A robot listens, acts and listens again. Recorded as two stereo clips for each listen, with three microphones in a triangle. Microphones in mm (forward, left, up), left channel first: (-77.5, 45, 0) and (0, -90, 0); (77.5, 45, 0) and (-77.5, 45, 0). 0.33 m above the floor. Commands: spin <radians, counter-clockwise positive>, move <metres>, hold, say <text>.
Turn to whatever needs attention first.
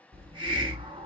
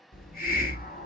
hold
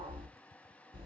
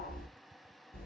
hold
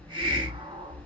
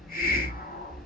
say I can't make out anything urgent to turn to.